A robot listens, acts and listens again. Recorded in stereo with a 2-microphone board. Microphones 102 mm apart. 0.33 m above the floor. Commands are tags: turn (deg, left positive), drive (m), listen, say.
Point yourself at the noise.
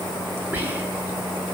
<turn deg="-20"/>
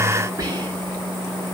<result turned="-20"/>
<turn deg="-140"/>
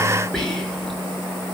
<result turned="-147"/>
<say>Facing the whispering, over 4 m away.</say>